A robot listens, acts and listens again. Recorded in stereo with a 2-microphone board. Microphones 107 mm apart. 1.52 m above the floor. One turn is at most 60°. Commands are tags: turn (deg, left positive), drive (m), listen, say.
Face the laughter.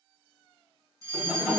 <turn deg="30"/>
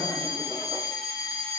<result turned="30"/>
<listen/>
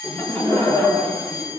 <turn deg="60"/>
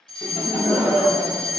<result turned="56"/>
<turn deg="60"/>
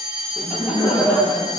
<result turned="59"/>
<turn deg="55"/>
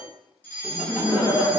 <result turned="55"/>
<say>Facing the laughter.</say>